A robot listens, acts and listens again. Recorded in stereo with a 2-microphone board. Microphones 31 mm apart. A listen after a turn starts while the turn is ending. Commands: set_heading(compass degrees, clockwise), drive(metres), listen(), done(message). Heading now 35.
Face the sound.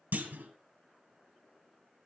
set_heading(125)
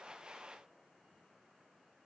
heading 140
set_heading(125)
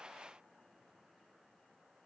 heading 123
done("Facing where the clunk came from. I can't hear it now.")